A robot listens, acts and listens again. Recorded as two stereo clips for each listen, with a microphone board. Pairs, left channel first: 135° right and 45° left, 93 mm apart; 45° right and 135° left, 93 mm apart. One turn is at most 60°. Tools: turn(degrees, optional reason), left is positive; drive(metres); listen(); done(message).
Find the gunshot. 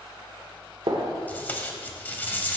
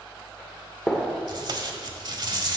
turn(degrees=35, reason="The gunshot: 35° left.")
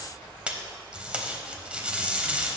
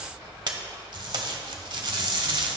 done("I heard a gunshot from this way, but can't make it out now.")